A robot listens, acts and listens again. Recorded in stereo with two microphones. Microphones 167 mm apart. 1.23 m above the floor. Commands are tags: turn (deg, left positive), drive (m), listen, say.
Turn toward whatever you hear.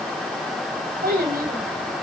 <turn deg="-70"/>
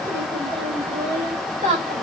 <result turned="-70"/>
<turn deg="-40"/>
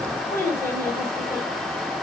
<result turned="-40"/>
<turn deg="15"/>
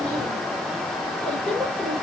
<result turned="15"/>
<say>Facing the child speaking, over 4 m away.</say>